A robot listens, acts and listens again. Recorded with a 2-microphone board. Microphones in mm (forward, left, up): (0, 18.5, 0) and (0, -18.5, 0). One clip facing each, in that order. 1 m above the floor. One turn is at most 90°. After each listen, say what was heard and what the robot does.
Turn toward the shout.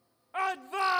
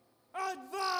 The shout: about 40° left or 140° left. Turn 40° left.
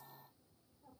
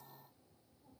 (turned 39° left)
Keep listening.
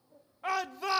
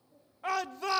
Found it: a shout, straight ahead.